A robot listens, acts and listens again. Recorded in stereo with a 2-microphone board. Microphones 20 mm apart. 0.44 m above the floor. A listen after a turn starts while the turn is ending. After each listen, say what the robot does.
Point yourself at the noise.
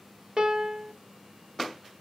Turn 35° right.
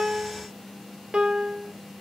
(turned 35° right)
Turn 100° right.
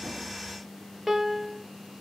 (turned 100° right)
Turn 10° right.
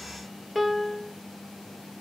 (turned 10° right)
Facing the piano.